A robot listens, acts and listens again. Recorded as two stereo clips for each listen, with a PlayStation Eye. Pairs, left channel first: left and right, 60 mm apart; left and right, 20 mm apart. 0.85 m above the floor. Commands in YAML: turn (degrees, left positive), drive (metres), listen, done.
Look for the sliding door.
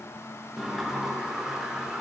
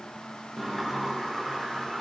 turn: -30
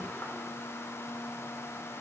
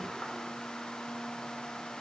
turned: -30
listen: true
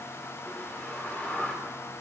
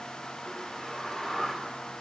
turn: 25
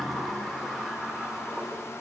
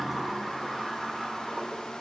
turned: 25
done: "Facing the sliding door."